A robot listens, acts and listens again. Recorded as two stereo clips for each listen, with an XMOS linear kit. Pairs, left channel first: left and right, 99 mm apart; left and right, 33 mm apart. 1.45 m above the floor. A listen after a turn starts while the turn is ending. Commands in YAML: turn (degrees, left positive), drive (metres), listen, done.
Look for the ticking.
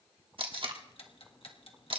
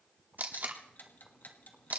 turn: 70
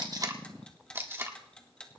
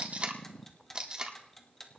turn: 10
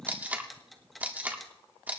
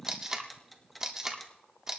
done: "Found it: ticking, straight ahead, 1 to 2 m away."